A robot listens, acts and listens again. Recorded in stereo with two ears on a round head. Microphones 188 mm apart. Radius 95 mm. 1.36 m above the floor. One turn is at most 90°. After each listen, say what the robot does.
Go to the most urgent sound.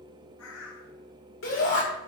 Turn 75° left.
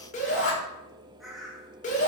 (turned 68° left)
Turn 35° left.
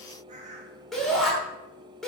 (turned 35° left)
Drive 1.0 m forward.
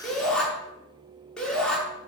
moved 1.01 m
Drive 1.0 m forward.
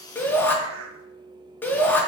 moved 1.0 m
Turn 10° left.
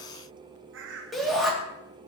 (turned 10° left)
Drive 1.0 m forward.
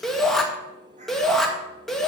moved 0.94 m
Drive 1.0 m forward.
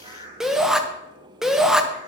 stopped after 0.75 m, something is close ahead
I am next to the shout.